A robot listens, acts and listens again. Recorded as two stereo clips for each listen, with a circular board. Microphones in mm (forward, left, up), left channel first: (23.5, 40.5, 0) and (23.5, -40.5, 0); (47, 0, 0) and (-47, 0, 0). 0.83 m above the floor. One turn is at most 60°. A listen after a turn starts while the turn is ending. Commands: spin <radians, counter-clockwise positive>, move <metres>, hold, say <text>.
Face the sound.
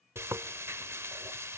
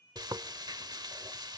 spin -1.05
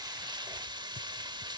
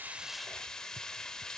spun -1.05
spin -1.05
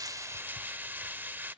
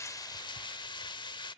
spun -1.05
spin -0.44
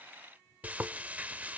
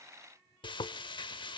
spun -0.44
spin -0.35
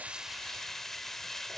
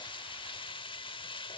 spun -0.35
say Found it: frying, straight ahead.